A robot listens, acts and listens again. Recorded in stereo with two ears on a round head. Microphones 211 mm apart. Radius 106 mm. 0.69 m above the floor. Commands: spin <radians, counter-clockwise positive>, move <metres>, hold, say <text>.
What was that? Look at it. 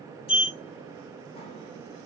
spin 0.44
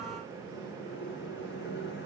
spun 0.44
spin 2.18
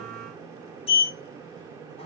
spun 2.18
spin 0.52
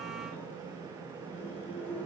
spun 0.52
spin 0.17
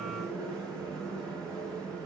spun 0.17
say Found it: a sliding door, straight ahead.